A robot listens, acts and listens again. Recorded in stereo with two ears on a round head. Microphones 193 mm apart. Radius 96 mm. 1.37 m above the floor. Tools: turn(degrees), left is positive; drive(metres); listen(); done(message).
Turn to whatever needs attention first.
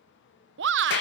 turn(degrees=-60)
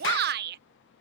turn(degrees=-55)
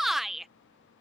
done("Found it: a shout, straight ahead.")